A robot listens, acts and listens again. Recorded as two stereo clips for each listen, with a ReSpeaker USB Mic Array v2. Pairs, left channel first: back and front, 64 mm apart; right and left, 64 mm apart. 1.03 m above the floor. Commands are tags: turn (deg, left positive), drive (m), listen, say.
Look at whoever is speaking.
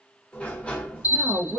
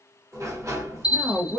<turn deg="50"/>
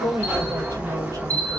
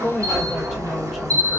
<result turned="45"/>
<say>Facing the woman speaking.</say>